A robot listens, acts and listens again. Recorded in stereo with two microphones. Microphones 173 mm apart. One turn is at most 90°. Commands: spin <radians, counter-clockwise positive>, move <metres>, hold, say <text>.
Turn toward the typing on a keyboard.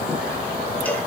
hold
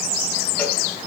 hold
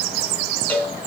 say I can't make out typing on a keyboard, only a cowbell.